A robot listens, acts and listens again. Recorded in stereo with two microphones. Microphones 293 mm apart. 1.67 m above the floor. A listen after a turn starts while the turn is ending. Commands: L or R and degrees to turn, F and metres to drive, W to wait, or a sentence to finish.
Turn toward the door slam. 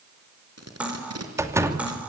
R30
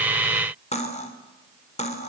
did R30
W
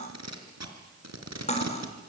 I heard a door slam, but can't make it out now. It was about 20° left or 140° right.